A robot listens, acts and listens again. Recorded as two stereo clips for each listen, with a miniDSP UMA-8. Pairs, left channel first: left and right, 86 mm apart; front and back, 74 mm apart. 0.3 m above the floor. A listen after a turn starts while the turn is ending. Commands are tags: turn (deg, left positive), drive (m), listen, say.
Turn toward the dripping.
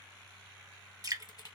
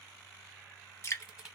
<turn deg="-50"/>
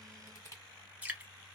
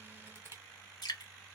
<turn deg="-20"/>
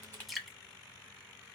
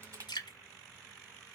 <say>Found it: dripping, straight ahead, under 1 m away.</say>